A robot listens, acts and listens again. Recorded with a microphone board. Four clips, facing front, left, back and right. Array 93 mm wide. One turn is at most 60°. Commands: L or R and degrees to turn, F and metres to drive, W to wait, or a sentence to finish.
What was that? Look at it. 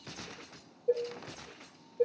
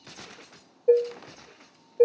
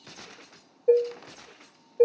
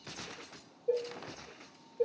L60
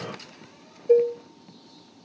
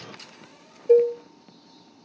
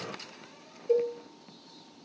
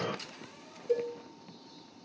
L60
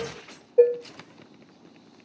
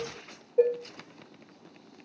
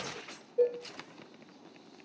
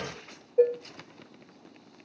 L10
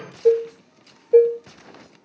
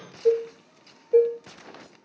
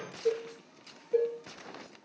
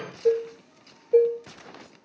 Facing the dishes clattering, 1 to 2 m away.